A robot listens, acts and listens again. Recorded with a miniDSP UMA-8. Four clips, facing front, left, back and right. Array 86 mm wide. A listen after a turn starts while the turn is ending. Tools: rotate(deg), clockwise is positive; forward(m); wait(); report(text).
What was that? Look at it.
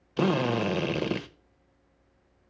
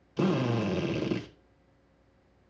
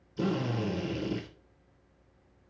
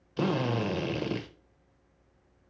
rotate(10)
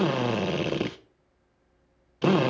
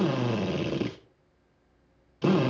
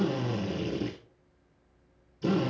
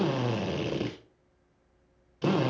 report("Found it: a drill, straight ahead, 1 to 2 m away.")